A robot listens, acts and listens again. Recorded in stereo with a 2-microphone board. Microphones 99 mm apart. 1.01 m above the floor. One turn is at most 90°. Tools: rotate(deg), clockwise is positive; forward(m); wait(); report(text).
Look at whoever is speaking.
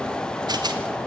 wait()
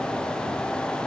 wait()
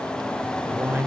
rotate(20)
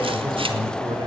rotate(90)
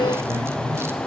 rotate(40)
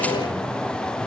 wait()
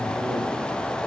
wait()
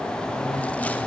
report("Facing where the man speaking came from. I can't hear it now.")